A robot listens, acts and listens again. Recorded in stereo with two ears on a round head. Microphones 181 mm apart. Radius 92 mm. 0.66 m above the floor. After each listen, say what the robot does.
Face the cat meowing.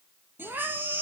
Turn 30° right.
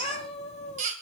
Turn 35° left.
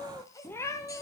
Turn 20° left.
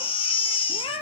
Turn 30° left.
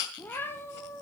Turn 15° left.
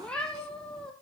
Facing the cat meowing, 1 to 2 m away.